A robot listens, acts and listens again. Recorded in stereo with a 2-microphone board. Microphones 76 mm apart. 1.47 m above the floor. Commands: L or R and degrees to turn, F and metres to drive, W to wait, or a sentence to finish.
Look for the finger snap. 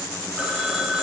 W
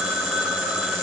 W
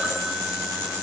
I can't make out a finger snap, only a phone ringing.